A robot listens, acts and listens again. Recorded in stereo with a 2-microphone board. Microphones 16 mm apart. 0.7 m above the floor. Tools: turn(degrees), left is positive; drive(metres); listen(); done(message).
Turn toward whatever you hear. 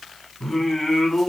turn(degrees=30)
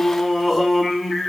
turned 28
turn(degrees=-15)
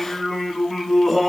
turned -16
done("Facing the singing, over 4 m away.")